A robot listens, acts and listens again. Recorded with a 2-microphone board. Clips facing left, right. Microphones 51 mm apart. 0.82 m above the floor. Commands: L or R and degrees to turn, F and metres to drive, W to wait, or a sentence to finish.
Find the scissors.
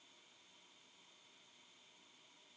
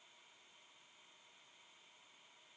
W
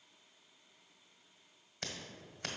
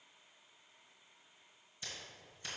L70
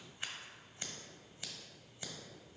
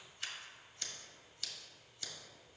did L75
L25
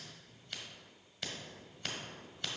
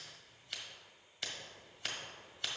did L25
Found it: scissors, straight ahead, 1 to 2 m away.